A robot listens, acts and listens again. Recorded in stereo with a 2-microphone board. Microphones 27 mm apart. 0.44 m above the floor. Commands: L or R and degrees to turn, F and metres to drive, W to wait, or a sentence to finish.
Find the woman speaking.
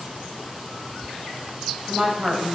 R35
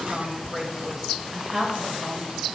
R20
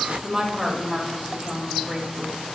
R35
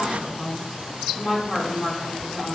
L10
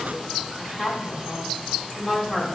Facing the woman speaking.